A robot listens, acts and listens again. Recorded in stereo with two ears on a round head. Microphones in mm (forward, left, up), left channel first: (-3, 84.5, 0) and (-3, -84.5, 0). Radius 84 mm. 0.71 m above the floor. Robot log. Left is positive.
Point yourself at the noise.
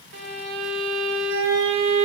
note: The violin: about 60° right or 120° right.
cmd yaw -60
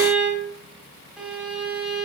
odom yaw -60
end: Found it: a violin, straight ahead.